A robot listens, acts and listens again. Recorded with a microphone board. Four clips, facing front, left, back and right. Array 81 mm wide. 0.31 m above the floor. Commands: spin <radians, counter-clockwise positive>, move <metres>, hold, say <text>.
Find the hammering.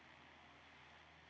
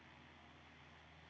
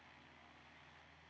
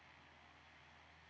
hold
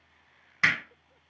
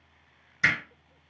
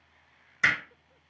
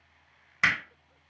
spin -1.13
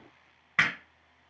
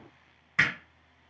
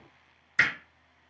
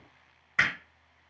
say Facing the hammering.